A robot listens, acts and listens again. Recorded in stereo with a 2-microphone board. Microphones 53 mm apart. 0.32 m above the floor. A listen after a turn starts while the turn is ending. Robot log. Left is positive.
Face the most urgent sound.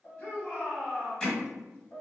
note: The shout: about 40° left or 140° left.
cmd yaw +40
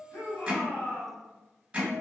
note: So it is at 90° left.
cmd yaw +90
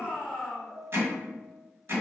end: Facing the shout.